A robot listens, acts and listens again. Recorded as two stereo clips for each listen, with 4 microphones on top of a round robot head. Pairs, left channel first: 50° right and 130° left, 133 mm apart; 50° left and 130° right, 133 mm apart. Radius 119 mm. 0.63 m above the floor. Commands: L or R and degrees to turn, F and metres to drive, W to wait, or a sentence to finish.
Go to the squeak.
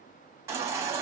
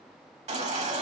W
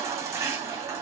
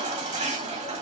W
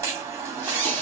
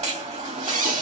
R125
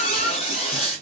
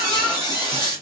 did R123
F1.0
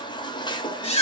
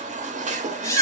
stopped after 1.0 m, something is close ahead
R15
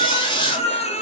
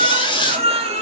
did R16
I am next to the squeak.